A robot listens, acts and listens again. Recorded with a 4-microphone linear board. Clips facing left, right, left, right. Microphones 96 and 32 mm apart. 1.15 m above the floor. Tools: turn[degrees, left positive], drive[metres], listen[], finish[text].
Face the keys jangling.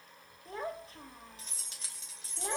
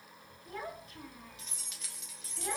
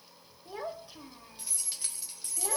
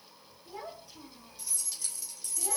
Thought: The keys jangling: about 30° left or 150° left.
Action: turn[30]
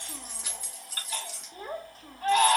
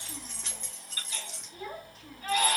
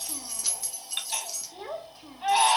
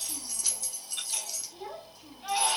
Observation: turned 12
Action: turn[30]
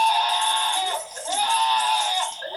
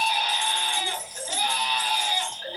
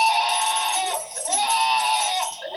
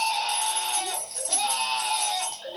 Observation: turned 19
Action: listen[]
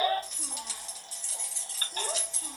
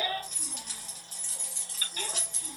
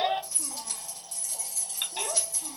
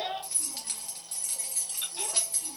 Thought: So it is at 50° right.
Action: turn[-50]
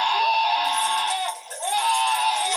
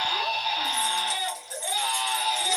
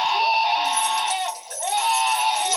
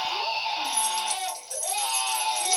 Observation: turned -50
Action: listen[]
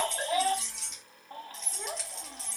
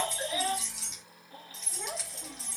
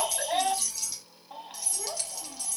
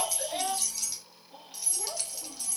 Action: finish[Found it: keys jangling, straight ahead, 1 to 2 m away.]